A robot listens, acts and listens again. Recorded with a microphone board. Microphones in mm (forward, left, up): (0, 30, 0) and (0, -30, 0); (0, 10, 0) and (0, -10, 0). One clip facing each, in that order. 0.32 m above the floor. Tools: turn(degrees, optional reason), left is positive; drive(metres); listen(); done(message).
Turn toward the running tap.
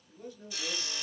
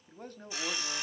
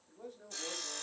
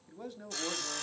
listen()
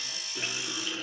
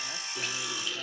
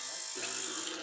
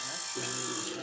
turn(degrees=15, reason="The running tap: about 15° left or 165° left.")
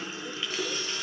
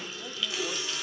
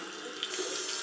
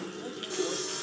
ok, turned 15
turn(degrees=150, reason="So it is at 150° left.")
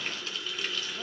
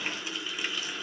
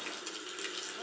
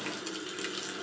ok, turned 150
turn(degrees=-15, reason="The running tap is now 15° right.")
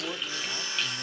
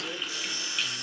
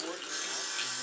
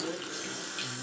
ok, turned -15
done("Found it: a running tap, straight ahead, 2 to 4 m away.")